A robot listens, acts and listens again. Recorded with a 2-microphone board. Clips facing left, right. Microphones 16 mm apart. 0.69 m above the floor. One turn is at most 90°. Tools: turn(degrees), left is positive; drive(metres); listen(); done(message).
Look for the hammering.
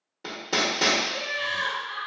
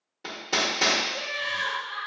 turn(degrees=30)
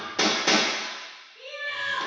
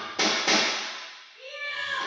turn(degrees=90)
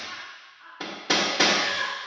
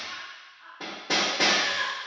turn(degrees=50)
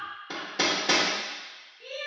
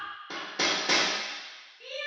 done("Facing the hammering, under 1 m away.")